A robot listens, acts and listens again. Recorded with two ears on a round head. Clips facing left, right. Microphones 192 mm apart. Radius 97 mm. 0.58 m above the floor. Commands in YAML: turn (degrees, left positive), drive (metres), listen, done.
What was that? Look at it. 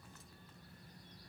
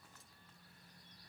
listen: true
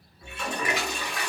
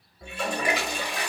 turn: -30
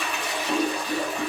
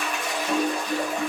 done: "Found it: a toilet flushing, straight ahead."